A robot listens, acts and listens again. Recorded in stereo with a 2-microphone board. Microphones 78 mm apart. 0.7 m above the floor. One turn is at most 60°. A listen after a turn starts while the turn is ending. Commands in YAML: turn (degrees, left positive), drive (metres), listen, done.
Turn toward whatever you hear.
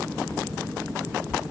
listen: true
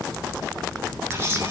turn: -30
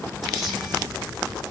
done: "Found it: a camera shutter, straight ahead."